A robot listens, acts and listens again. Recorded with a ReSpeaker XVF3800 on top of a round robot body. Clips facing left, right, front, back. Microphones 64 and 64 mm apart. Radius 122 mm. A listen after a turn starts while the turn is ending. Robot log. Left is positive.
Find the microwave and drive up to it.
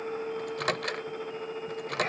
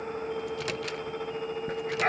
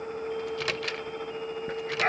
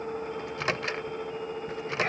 note: The microwave: 120° left.
cmd yaw +120
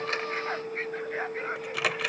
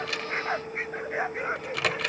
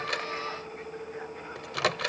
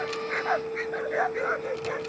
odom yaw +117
cmd fwd 1.0
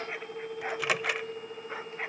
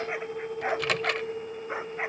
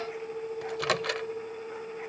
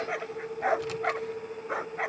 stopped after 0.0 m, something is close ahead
note: The microwave is now 10° left.
cmd yaw +10
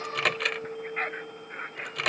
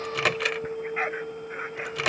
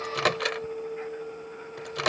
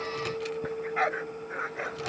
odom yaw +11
end: Something is in my way. I am facing the microwave but have not reached it.